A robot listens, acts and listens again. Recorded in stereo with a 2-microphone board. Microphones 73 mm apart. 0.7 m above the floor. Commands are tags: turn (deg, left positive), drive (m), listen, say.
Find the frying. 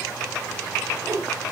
<listen/>
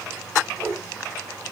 <listen/>
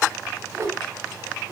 <say>I can't make out frying to turn to.</say>